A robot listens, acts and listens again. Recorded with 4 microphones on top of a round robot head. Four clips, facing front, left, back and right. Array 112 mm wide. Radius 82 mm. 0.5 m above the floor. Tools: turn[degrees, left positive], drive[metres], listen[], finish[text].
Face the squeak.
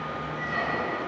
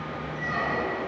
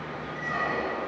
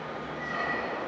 Thought: The squeak: 140° left.
Action: turn[140]
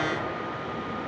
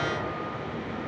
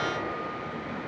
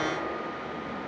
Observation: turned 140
Action: listen[]
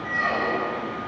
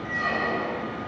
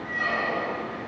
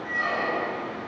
Thought: The squeak is now 15° left.
Action: turn[15]
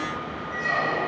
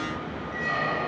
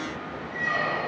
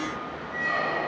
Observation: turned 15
Action: finish[Found it: a squeak, straight ahead.]